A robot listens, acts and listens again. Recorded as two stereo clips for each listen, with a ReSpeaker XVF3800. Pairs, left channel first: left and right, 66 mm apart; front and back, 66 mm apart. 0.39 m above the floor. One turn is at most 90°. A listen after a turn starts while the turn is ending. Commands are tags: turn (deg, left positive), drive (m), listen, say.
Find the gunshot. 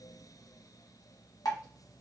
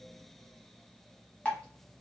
<listen/>
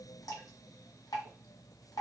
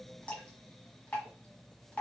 <listen/>
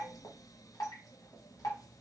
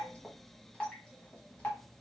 <say>I can't make out a gunshot, only dripping.</say>